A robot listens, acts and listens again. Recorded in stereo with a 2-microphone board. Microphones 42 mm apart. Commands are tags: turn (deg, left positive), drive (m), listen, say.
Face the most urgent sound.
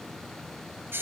<listen/>
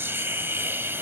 <listen/>
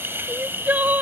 <turn deg="-45"/>
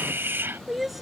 <say>Found it: crying, straight ahead.</say>